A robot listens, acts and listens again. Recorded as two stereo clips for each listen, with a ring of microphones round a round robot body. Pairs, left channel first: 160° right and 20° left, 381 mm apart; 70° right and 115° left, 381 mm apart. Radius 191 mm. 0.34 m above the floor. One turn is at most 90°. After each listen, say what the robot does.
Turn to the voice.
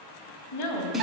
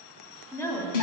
Turn 90° right.
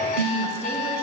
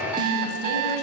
Turn 60° right.
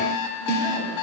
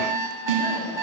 Keep listening.
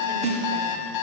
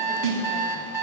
Facing where the woman speaking came from. I can't hear it now.